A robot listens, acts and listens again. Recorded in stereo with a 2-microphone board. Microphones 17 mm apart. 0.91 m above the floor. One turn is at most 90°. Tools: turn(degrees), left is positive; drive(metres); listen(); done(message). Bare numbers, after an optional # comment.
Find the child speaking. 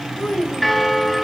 # The child speaking: about 50° left or 130° left.
turn(50)
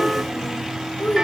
# So it is at 80° left.
turn(80)
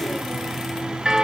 listen()
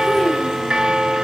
listen()
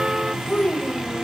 # The child speaking is now 45° left.
turn(45)
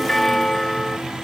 listen()
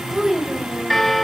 # The child speaking is now 20° right.
turn(-20)
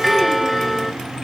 listen()
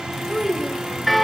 done("Facing the child speaking.")